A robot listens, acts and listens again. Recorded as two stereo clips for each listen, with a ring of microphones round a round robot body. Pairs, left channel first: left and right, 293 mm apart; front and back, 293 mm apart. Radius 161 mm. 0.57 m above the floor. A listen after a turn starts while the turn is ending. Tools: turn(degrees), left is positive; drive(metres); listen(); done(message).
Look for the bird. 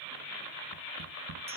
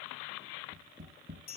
listen()
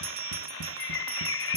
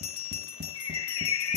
turn(degrees=40)
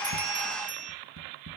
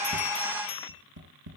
listen()
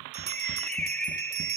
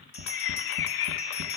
done("Found it: a bird, straight ahead.")